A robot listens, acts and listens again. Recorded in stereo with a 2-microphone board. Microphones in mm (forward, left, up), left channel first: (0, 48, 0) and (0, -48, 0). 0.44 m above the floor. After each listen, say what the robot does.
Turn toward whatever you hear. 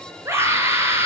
Turn 30° right.
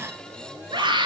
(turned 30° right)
Turn 120° right.
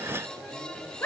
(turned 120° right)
Turn 25° left.
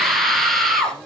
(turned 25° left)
Facing the scream, over 4 m away.